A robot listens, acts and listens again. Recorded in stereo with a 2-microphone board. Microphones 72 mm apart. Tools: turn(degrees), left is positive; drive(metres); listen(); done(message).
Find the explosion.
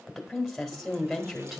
listen()
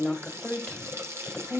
listen()
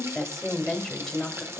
done("I can't make out an explosion, only a running tap and a woman speaking.")